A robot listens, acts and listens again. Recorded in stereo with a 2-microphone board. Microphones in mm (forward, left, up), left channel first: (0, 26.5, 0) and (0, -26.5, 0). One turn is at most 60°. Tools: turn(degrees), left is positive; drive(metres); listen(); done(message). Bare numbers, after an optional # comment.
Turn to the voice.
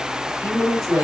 # The woman speaking: about 75° right or 105° right.
turn(-60)
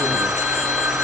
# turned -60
listen()
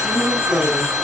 # So it is at 35° right.
turn(-35)
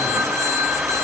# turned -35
listen()
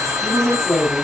done("Facing the woman speaking.")